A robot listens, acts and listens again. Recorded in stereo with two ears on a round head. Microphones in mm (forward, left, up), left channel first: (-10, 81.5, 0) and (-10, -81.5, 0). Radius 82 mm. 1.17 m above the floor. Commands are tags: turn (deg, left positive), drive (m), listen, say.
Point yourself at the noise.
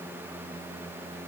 <listen/>
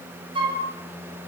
<turn deg="-30"/>
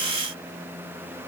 <listen/>
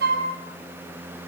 <turn deg="-120"/>
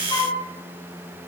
<turn deg="25"/>
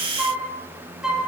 <say>Found it: a flute, straight ahead.</say>